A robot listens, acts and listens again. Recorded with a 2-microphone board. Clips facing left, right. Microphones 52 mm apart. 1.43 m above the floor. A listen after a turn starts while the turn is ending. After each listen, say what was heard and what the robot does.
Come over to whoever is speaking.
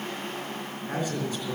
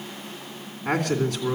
Turn 90° right.
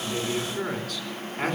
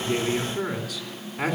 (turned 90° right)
So it is at 10° right. Turn 10° right.
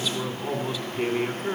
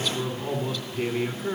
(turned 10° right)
Drive 1.0 m forward.
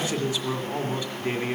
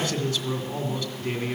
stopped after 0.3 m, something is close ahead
The man speaking is now 10° left. Turn 10° left.
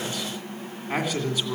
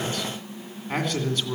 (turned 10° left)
Something is in my way. I am facing the man speaking but have not reached it.